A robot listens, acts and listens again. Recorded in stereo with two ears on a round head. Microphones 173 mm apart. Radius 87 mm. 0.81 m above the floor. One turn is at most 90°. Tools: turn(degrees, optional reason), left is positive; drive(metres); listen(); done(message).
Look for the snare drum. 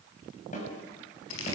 turn(degrees=40, reason="The snare drum: about 40° left or 140° left.")
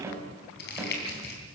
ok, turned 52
turn(degrees=-15, reason="So it is at 15° right.")
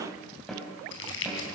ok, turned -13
done("Facing the snare drum, over 4 m away.")